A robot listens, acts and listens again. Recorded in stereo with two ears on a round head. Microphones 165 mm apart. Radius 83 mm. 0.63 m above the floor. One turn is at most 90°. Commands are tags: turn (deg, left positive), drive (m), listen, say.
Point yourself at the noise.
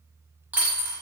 <turn deg="-30"/>
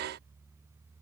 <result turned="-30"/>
<listen/>
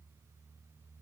<say>I heard a dropped coin, but can't make it out now. It was about 20° left or 140° right.</say>